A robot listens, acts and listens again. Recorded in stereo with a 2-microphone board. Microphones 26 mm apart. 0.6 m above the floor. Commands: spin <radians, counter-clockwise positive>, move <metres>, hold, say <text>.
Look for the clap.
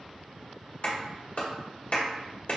spin 0.96
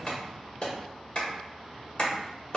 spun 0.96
spin 0.96
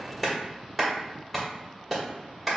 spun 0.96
say Facing the clap, 1 to 2 m away.